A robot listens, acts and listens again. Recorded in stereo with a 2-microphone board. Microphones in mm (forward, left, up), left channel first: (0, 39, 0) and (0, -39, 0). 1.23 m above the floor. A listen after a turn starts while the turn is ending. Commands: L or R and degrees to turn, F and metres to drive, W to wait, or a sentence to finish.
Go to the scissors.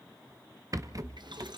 W
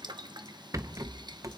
W
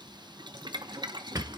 I can't make out scissors to turn to.